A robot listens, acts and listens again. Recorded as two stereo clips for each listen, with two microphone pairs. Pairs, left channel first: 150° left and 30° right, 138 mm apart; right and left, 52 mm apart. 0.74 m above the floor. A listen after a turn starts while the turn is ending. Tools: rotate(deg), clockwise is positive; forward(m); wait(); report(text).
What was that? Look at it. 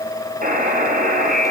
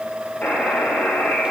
rotate(30)
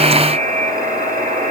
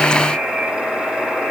rotate(10)
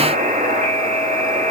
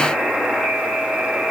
report("Found it: a buzzer, straight ahead, 2 to 4 m away.")